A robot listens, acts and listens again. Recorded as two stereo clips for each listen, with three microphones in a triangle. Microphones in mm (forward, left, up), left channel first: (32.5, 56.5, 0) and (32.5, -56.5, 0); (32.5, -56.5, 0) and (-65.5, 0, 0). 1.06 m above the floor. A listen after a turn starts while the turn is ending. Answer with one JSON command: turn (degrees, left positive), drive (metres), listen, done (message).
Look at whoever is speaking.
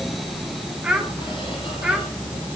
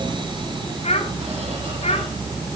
{"turn": -10}
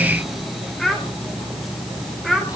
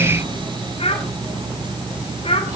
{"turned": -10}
{"done": "Found it: a child speaking, straight ahead, 2 to 4 m away."}